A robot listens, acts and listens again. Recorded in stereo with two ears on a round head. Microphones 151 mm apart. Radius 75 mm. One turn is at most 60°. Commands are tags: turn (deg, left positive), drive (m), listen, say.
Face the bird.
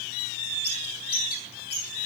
<turn deg="60"/>
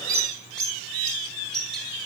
<say>Found it: a bird, straight ahead.</say>